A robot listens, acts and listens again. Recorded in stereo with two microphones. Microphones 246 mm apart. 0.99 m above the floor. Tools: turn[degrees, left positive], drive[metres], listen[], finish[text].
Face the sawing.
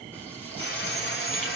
Thought: The sawing: about 50° left or 130° left.
Action: turn[50]
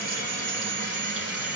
Thought: So it is at 85° left.
Action: turn[85]
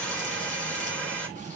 Action: finish[Facing the sawing.]